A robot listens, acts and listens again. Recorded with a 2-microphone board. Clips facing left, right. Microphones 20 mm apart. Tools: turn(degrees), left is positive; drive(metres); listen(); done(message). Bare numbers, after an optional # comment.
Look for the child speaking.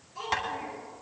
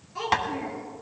# The child speaking: about 30° right or 150° right.
turn(-30)
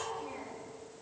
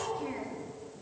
# So it is at 130° right.
turn(-130)
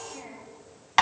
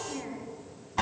# The child speaking is now 40° right.
turn(-40)
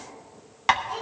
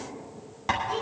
# The child speaking is now 30° right.
turn(-30)
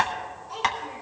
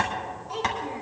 # The child speaking is now 15° right.
turn(-15)
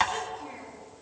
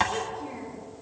done("Facing the child speaking.")